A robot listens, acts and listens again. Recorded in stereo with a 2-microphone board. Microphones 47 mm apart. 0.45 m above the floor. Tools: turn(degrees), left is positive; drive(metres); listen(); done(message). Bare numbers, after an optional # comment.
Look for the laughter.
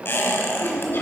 # The laughter: about 55° left or 125° left.
turn(55)
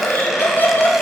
# So it is at 40° left.
turn(40)
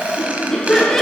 done("Facing the laughter, 2 to 4 m away.")